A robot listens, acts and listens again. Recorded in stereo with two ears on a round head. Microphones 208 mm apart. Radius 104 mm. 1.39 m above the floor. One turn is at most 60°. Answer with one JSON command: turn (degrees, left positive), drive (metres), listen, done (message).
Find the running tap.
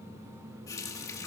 {"turn": 30}
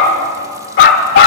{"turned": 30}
{"listen": true}
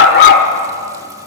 {"listen": true}
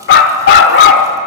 {"done": "I heard a running tap, but can't make it out now. It was about 15° right or 135° left."}